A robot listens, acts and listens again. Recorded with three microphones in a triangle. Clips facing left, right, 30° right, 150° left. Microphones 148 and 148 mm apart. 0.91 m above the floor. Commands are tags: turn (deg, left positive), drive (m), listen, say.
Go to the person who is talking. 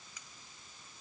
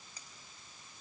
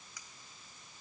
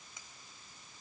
<listen/>
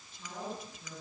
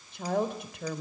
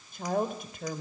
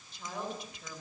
<turn deg="-70"/>
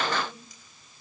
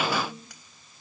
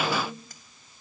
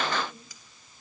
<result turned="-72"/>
<drive m="1.0"/>
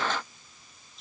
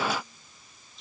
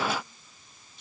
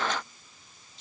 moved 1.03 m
<drive m="1.0"/>
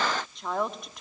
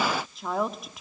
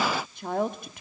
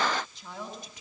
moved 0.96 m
<drive m="1.0"/>
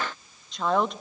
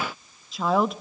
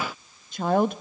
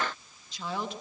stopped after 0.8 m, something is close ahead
<say>Arrived at the woman speaking, straight ahead.</say>